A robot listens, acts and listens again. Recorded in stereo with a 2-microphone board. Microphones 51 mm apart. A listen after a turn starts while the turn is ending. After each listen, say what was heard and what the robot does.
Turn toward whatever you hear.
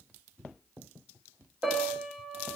The piano: about 20° right or 160° right. Turn 20° right.
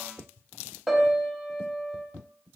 Found it: a piano, straight ahead.